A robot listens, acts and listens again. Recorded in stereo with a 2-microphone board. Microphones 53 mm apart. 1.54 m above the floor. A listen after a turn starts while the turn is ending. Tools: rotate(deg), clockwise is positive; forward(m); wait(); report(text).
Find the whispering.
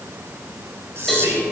rotate(55)
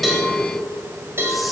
wait()
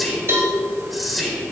report("Found it: whispering, straight ahead, over 4 m away.")